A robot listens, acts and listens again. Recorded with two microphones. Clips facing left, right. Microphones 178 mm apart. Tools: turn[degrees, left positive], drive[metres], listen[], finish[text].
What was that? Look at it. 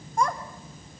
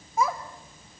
Action: turn[-30]
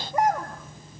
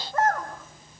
Thought: So it is at 15° left.
Action: turn[15]
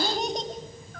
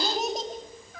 Action: finish[Facing the child speaking, 2 to 4 m away.]